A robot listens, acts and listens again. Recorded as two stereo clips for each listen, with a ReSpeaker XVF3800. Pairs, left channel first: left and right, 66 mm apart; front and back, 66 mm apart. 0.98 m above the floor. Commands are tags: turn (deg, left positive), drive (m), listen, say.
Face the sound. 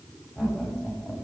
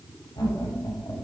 <say>Found it: laughter, straight ahead.</say>